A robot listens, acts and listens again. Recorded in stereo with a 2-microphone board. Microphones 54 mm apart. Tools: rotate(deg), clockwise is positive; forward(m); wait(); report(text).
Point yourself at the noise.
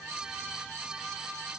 wait()
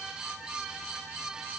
wait()
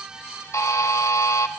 rotate(-60)
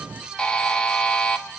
rotate(-15)
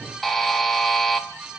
report("Facing the buzzer, 1 to 2 m away.")